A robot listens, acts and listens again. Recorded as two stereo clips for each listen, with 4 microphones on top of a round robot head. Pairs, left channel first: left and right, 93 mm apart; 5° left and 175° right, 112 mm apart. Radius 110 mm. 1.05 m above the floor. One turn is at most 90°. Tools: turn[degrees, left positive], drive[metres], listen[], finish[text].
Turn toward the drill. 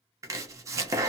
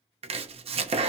Action: listen[]
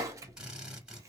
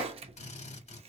Thought: The drill: 10° right.
Action: turn[-10]
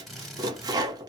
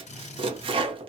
Action: finish[Facing the drill.]